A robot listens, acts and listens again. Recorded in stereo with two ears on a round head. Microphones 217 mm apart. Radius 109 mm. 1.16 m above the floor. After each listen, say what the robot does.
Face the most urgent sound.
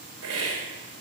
Keep listening.
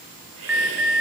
Turn 30° right.
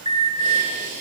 Turn 20° left.
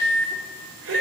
Facing the alarm, 1 to 2 m away.